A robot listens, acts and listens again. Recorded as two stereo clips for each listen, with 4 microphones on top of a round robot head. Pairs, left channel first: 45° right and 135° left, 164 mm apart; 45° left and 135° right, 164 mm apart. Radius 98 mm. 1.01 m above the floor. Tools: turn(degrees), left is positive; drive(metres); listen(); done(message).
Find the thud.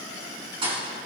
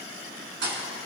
turn(degrees=-165)
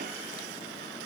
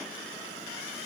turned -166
done("Facing where the thud came from. I can't hear it now.")